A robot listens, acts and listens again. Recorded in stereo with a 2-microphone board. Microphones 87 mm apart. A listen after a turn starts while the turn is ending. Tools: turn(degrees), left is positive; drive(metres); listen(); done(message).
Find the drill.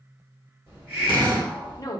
turn(degrees=-60)
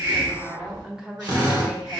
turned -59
turn(degrees=-60)
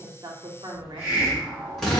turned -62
done("Found it: a drill, straight ahead, 1 to 2 m away.")